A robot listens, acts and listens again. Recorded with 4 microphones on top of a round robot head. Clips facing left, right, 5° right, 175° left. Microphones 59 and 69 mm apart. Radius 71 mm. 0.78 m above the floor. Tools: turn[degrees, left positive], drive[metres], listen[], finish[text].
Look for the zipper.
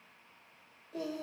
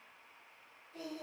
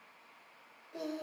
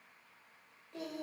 Action: listen[]
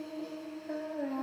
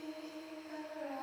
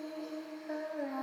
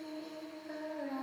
Action: listen[]
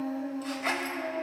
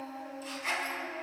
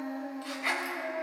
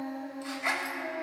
Thought: The zipper: 115° left.
Action: turn[115]
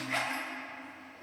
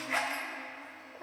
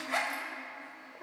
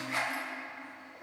Thought: The zipper is now 10° right.
Action: turn[-10]
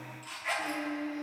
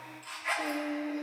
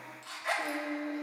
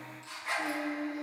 Action: finish[Found it: a zipper, straight ahead, 2 to 4 m away.]